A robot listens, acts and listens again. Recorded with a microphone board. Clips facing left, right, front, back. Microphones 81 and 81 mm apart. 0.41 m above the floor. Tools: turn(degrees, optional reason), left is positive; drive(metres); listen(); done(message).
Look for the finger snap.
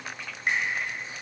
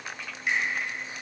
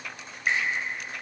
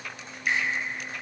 turn(degrees=55, reason="The finger snap: 55° left.")
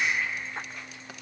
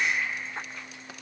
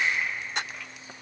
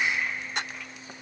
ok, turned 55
done("Found it: a finger snap, straight ahead.")